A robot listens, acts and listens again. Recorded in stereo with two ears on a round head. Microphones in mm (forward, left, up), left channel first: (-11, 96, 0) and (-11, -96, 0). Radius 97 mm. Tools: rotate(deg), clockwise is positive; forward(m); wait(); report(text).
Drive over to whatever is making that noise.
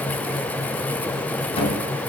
rotate(-30)
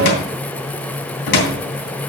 rotate(-120)
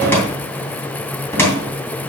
rotate(-10)
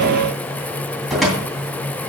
forward(1.0)
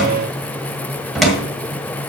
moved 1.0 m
forward(1.0)
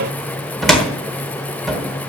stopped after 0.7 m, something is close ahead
report("Arrived at the cupboard door, straight ahead.")